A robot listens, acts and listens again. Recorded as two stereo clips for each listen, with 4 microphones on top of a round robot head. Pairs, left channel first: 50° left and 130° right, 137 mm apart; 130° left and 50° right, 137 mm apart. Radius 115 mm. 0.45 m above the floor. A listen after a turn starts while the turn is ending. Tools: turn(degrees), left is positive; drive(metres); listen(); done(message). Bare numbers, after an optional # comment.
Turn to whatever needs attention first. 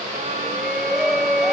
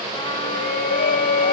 # The shout: 140° left.
turn(140)
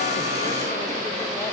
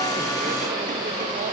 listen()
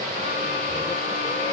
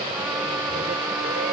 listen()
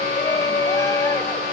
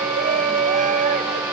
# The shout is now 20° right.
turn(-20)
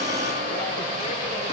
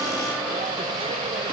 listen()
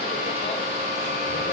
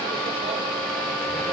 listen()
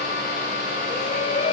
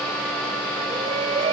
done("Found it: a shout, straight ahead.")